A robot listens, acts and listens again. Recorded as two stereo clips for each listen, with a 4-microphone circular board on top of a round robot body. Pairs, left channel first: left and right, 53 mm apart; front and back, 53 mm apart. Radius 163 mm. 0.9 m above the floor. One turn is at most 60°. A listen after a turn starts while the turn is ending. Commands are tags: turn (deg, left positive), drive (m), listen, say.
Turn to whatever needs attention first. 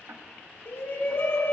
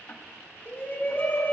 <turn deg="55"/>
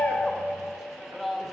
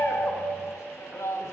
<say>Found it: a shout, straight ahead.</say>